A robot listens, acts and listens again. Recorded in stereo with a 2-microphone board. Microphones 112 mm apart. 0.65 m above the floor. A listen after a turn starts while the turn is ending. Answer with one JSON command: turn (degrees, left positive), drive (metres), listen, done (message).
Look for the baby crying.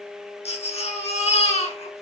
{"turn": 90}
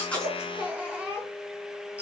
{"turn": -10}
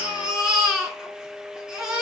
{"done": "Found it: a baby crying, straight ahead, over 4 m away."}